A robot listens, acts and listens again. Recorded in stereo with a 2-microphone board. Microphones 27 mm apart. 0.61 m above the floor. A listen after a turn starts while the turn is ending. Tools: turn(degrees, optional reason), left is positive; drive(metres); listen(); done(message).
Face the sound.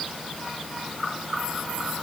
listen()
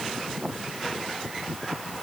listen()
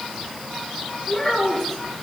turn(degrees=30)
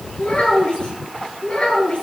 turn(degrees=140, reason="So it is at 140° left.")
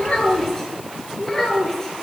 turn(degrees=25, reason="The child speaking is now 25° left.")
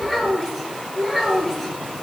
done("Found it: a child speaking, straight ahead.")